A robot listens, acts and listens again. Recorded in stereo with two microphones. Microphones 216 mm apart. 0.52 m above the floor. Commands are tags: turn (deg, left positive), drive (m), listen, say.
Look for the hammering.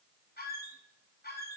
<listen/>
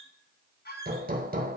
<turn deg="-40"/>
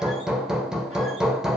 <say>Facing the hammering.</say>